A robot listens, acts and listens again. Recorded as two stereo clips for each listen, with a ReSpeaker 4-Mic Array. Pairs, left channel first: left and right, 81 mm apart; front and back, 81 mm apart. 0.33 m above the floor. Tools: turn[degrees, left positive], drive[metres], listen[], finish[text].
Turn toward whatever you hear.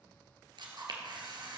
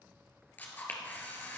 Thought: The camera shutter: 70° right.
Action: turn[-70]
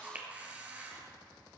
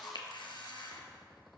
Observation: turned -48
Thought: The camera shutter is now 20° right.
Action: turn[-20]
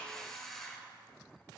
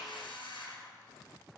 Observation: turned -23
Action: finish[Found it: a camera shutter, straight ahead.]